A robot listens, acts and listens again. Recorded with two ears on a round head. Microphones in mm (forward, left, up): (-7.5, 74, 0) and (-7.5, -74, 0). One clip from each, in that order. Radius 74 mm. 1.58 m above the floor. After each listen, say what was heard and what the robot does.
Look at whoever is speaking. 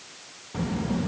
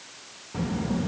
Turn 30° left.
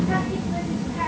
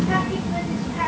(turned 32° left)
So it is at 25° right. Turn 25° right.
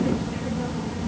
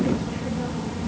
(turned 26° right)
Found it: a child speaking, straight ahead.